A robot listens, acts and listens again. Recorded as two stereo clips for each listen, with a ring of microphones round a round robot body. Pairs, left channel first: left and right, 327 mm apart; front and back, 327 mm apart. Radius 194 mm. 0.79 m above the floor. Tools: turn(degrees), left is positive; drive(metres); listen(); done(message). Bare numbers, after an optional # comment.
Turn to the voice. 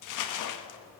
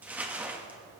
listen()
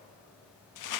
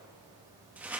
listen()
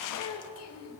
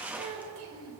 # The child speaking: 135° left.
turn(135)
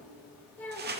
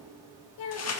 done("Facing the child speaking.")